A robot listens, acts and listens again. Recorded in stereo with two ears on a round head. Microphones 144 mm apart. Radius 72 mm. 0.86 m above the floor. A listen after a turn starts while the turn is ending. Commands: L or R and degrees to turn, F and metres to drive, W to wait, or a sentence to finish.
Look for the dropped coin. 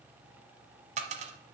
R45
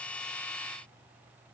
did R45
W
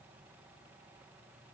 I heard a dropped coin, but can't make it out now. It was about straight ahead or 90° right.